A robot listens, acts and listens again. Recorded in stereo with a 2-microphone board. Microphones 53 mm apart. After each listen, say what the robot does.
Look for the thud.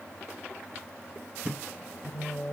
Turn 20° right.
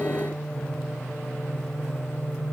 Keep listening.
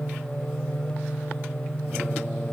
I heard a thud, but can't make it out now. It was about straight ahead or 140° right.